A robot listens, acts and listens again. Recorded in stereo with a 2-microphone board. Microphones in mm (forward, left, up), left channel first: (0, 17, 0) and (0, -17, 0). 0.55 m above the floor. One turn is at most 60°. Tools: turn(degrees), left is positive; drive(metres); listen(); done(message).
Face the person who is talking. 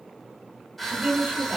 turn(degrees=-50)
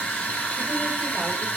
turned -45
listen()
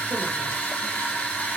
listen()
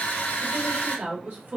turn(degrees=-60)
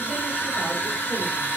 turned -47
turn(degrees=-25)
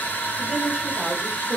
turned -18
turn(degrees=-10)
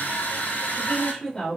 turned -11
done("Facing the woman speaking.")